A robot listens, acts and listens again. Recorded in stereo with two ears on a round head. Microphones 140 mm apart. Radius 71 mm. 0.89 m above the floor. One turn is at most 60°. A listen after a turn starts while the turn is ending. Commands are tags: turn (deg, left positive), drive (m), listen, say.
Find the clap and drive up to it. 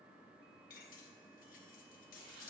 <listen/>
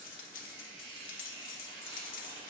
<listen/>
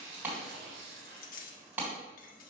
<turn deg="-30"/>
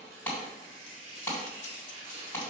<turn deg="15"/>
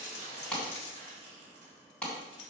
<drive m="1.0"/>
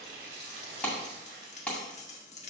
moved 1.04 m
<drive m="1.0"/>
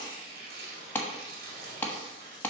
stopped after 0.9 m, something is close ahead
<turn deg="10"/>
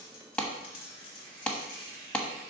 <say>I am next to the clap.</say>